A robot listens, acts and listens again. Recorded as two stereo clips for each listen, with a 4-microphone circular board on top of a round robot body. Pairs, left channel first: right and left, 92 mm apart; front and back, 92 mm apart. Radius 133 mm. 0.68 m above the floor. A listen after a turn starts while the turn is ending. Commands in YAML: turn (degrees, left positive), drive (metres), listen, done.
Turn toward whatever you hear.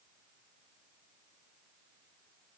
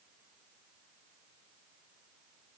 listen: true
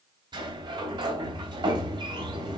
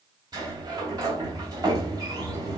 turn: 130
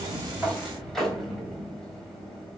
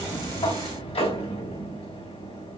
done: "Facing the sliding door."